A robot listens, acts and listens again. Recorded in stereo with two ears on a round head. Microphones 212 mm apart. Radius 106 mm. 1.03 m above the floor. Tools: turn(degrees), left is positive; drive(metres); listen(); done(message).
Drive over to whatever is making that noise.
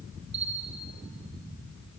turn(degrees=-50)
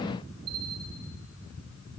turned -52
turn(degrees=-75)
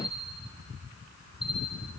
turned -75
drive(metres=1.0)
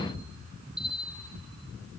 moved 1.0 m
drive(metres=1.0)
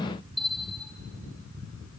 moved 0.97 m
drive(metres=1.0)
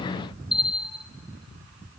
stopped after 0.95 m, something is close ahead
done("Arrived at the bell, straight ahead.")